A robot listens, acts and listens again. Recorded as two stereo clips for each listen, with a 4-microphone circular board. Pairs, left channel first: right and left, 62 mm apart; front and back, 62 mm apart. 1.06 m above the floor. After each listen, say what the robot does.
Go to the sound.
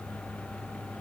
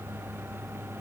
Keep listening.
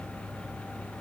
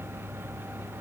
Keep listening.
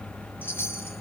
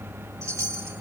Turn 145° right.
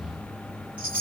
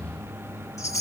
Turn 25° left.
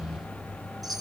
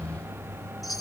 Drive 1.0 m forward.
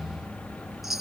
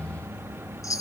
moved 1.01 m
Drive 1.0 m forward.
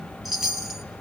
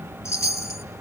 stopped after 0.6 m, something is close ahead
Arrived at the chime, straight ahead.